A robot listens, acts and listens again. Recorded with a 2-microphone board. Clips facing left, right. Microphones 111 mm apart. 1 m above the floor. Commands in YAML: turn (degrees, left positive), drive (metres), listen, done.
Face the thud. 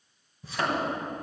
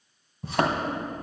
turn: -60
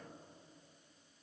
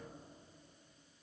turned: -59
listen: true
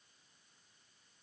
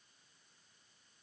done: "I heard a thud, but can't make it out now. It was about straight ahead or 60° right."